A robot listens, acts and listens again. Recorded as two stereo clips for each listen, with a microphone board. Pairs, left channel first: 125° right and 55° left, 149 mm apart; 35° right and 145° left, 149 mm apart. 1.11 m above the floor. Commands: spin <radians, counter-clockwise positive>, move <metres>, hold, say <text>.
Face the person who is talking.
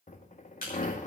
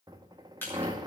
hold
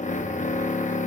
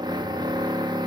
hold
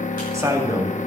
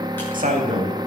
spin 2.18
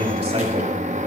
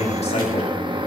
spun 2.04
spin 0.17
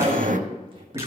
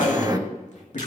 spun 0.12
say Facing the man speaking, 2 to 4 m away.